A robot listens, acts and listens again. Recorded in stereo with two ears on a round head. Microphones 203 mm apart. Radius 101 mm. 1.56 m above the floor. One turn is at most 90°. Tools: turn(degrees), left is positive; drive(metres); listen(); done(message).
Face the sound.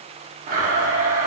turn(degrees=-35)
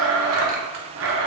turn(degrees=-90)
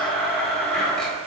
done("Facing the blender.")